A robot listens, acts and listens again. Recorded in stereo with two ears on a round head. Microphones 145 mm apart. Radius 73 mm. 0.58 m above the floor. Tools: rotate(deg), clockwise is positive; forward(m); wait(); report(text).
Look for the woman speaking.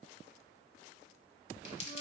wait()
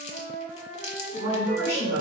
rotate(30)
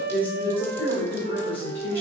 rotate(-15)
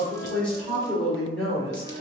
report("Facing the woman speaking.")